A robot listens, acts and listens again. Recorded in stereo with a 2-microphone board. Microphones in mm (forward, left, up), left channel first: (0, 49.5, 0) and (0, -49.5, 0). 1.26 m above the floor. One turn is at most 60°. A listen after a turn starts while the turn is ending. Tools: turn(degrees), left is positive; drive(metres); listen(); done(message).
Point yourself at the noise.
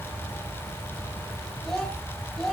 turn(degrees=30)
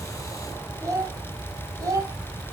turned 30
turn(degrees=-35)
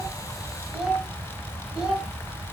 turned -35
turn(degrees=-10)
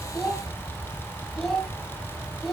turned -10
done("Found it: a child speaking, straight ahead.")